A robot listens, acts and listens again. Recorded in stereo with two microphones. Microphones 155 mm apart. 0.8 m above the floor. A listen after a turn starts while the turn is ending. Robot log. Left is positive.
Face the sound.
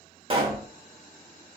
note: The pop: about 35° right or 145° right.
cmd yaw -35
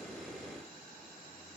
cmd idle
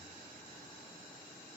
end: I heard a pop, but can't make it out now. It was about straight ahead or 110° right.